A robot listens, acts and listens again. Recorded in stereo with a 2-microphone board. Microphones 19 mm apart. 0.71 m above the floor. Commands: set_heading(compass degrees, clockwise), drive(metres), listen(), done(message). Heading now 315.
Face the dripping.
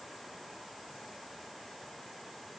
listen()
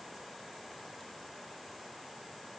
listen()
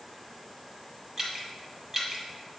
set_heading(340)
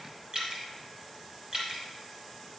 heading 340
set_heading(110)
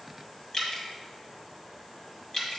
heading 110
set_heading(75)
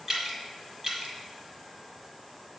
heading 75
set_heading(90)
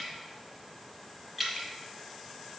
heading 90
done("Facing the dripping.")